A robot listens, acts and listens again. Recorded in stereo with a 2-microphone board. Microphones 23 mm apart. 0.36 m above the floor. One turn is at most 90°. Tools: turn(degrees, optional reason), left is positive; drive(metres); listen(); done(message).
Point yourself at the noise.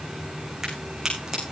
turn(degrees=-20, reason="The crack: about 20° right or 160° right.")
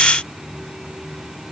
listen()
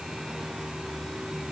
done("I heard a crack, but can't make it out now. It was about straight ahead or 140° right.")